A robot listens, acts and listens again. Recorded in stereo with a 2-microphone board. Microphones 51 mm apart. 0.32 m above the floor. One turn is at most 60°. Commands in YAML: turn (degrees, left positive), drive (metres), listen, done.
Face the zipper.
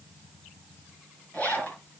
turn: 35
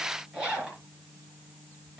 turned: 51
turn: -15
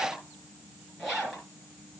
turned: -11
done: "Found it: a zipper, straight ahead."